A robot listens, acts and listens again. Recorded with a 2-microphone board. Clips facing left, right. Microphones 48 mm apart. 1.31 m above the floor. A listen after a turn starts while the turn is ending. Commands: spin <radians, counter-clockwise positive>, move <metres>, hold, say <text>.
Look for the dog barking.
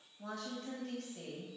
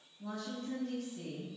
hold
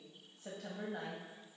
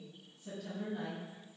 hold
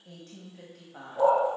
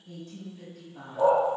spin -0.52
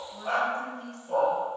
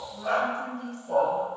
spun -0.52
spin -2.53
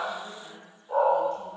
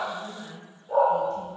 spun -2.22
spin -0.35
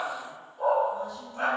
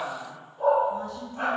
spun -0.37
say Found it: a dog barking, straight ahead.